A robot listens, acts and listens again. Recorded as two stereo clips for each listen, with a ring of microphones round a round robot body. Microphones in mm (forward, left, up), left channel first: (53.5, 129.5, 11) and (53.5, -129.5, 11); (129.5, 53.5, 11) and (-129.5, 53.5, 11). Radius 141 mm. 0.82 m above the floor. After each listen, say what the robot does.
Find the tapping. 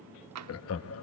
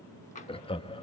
Turn 65° right.
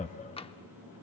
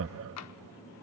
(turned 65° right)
Turn 20° left.
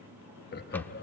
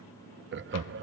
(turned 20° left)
Keep listening.
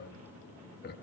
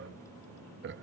Keep listening.
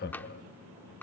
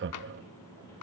Found it: tapping, straight ahead, under 1 m away.